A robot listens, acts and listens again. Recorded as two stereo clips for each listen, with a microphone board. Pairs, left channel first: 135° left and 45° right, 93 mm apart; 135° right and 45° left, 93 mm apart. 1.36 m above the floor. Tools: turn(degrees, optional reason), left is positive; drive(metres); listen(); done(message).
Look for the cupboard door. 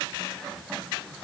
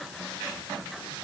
listen()
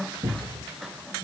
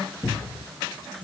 turn(degrees=-95, reason="The cupboard door: 95° right.")
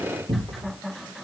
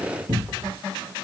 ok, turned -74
turn(degrees=-20, reason="The cupboard door is now 20° right.")
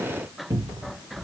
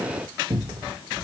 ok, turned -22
done("Facing the cupboard door, 1 to 2 m away.")